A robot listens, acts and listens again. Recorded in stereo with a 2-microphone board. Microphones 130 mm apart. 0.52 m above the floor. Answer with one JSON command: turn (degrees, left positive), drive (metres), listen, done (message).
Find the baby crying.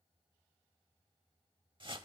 {"listen": true}
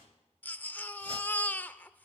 {"turn": 15}
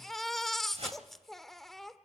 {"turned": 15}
{"done": "Found it: a baby crying, straight ahead, under 1 m away."}